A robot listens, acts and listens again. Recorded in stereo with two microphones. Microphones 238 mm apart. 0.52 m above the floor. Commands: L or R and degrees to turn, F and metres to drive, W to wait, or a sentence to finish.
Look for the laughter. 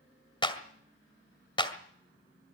W
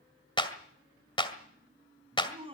R25
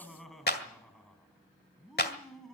Facing the laughter.